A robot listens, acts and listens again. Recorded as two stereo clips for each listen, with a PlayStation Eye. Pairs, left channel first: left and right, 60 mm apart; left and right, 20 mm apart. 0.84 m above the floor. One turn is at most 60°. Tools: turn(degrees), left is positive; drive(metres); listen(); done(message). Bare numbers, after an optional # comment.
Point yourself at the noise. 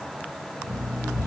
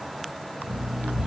# The alarm clock: about 75° right or 105° right.
turn(-60)
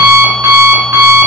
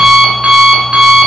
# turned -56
# So it is at 50° right.
turn(-50)
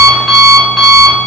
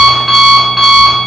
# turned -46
done("Found it: an alarm clock, straight ahead.")